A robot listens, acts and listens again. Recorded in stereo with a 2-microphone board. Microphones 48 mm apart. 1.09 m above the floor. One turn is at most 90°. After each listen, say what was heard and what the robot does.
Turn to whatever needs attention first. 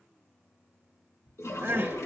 The crying: about 50° right or 130° right. Turn 50° right.
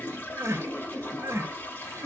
So it is at 80° right. Turn 80° right.
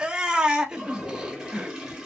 The crying is now 15° right. Turn 15° right.
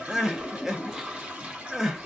The crying is now 10° right. Turn 10° right.
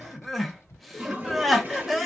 Facing the crying.